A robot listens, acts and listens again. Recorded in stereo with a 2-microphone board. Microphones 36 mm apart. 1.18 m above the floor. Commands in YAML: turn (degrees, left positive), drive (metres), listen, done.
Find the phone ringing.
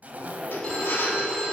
turn: 30
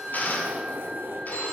turn: 120
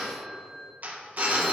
turn: 10
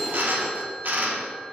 done: "Found it: a phone ringing, straight ahead, 1 to 2 m away."